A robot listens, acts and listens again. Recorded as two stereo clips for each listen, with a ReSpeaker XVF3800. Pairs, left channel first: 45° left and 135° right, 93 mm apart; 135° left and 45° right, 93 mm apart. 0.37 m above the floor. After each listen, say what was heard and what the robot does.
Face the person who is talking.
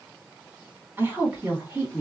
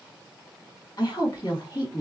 The woman speaking: 160° left. Turn 160° left.
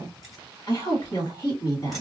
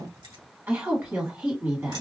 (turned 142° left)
The woman speaking is now 15° left. Turn 15° left.
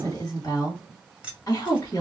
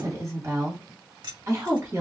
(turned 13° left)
Facing the woman speaking.